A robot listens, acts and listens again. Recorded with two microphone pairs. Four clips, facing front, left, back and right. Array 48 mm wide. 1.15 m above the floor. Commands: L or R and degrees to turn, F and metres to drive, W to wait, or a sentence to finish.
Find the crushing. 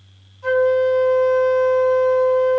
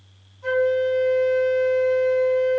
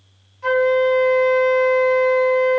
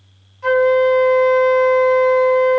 W
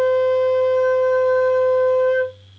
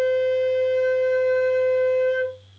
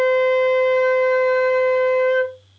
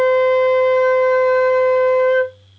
W
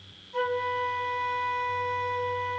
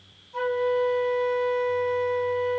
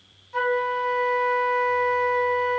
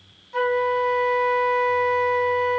I can't make out crushing, only a flute.